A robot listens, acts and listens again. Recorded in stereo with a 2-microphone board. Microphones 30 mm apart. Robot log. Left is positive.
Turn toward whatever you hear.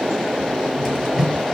note: The cupboard door: about 20° right or 160° right.
cmd yaw -20
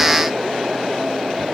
cmd idle
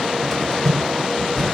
end: Found it: a cupboard door, straight ahead, over 4 m away.